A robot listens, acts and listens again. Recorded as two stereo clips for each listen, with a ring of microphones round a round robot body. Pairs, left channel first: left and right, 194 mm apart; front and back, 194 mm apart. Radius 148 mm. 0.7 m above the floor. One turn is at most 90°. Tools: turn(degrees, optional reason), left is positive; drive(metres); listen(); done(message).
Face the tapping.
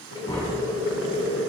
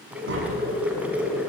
turn(degrees=90, reason="The tapping: 165° left.")
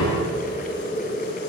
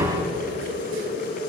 turn(degrees=90, reason="The tapping is now 115° left.")
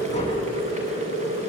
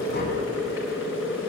turn(degrees=25, reason="Nothing new. It was at 25° left.")
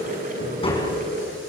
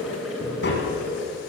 turn(degrees=25, reason="The tapping is now 25° left.")
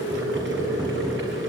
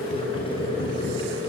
listen()
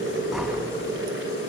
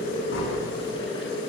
done("Found it: tapping, straight ahead.")